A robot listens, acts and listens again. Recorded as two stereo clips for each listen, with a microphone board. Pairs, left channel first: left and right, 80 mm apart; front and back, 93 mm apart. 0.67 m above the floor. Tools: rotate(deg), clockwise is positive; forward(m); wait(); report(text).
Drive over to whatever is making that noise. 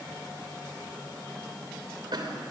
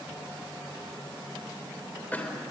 rotate(70)
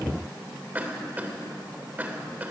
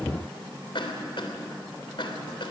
rotate(20)
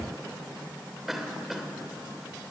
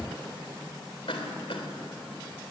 forward(1.0)
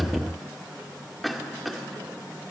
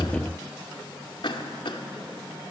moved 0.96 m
forward(1.0)
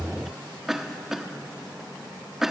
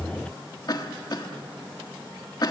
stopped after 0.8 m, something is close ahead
report("I am next to the cough.")